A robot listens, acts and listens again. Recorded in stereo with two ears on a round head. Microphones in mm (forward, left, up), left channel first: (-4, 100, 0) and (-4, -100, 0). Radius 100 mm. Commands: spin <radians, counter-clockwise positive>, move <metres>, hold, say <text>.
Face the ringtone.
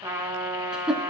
hold
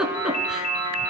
spin 0.70
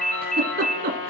say Facing the ringtone.